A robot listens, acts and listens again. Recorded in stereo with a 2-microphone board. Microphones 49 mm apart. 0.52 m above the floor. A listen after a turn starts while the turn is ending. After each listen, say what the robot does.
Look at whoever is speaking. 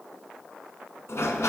Keep listening.
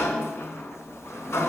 Keep listening.
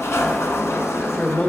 Turn 35° left.
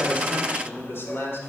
Turn 100° left.
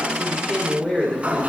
Turn 15° left.
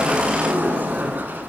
Keep listening.
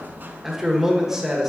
Turn 10° right.
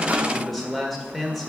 Facing the man speaking.